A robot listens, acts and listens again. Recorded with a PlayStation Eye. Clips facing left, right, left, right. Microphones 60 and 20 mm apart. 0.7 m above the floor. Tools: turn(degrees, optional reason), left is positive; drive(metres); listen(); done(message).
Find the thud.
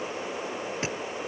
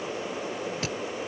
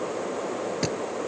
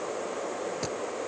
turn(degrees=25, reason="The thud: about 25° left or 155° left.")
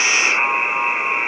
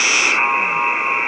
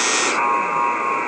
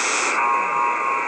listen()
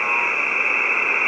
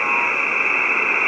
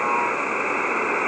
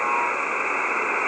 done("I heard a thud, but can't make it out now. It was about straight ahead or 130° left.")